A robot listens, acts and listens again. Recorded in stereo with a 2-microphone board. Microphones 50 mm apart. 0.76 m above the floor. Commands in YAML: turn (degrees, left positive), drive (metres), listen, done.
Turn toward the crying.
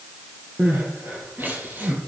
turn: -40
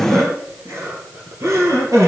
turn: -100
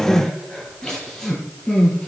turn: 10
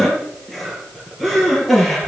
done: "Facing the crying."